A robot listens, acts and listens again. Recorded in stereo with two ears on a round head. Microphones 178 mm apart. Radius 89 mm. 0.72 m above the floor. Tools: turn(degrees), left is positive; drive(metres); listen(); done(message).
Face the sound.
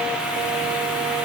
listen()
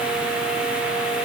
listen()
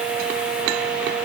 done("I can't make out anything.")